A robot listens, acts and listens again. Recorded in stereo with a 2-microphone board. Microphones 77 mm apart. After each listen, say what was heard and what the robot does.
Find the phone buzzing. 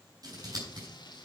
Keep listening.
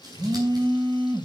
Turn 90° right.
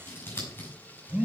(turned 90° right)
So it is at 15° right. Turn 15° right.
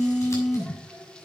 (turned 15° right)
Facing the phone buzzing, 1 to 2 m away.